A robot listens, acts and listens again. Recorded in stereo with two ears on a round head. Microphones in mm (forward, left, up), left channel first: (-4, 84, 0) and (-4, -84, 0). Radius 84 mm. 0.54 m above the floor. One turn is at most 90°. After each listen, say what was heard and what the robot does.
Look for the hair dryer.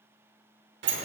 Keep listening.
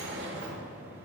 Keep listening.
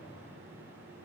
I can't make out a hair dryer, only a sliding door.